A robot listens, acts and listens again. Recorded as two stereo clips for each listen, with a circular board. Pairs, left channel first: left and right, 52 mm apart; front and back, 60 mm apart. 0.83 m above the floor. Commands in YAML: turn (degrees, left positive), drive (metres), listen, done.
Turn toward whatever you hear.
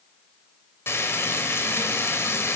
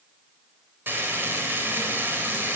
turn: 130
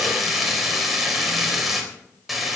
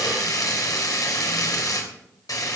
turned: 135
done: "Facing the frying, 2 to 4 m away."